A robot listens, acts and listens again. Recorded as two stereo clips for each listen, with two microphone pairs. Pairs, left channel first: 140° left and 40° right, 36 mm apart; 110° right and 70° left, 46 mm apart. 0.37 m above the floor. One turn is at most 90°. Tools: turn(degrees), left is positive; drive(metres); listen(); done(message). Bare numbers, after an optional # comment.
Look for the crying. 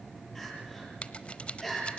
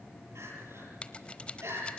# The crying: 60° left.
turn(60)
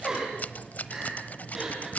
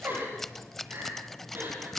# The crying is now 35° left.
turn(35)
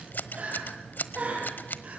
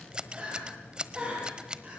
# The crying is now 10° left.
turn(10)
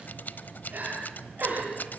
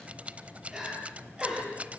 done("Found it: crying, straight ahead.")